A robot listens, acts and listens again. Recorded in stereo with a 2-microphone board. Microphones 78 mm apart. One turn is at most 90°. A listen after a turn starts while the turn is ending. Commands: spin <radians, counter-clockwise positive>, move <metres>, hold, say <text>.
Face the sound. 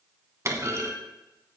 spin -0.70
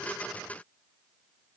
hold
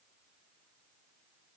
say I heard a clunk, but can't make it out now. It was about straight ahead or 100° right.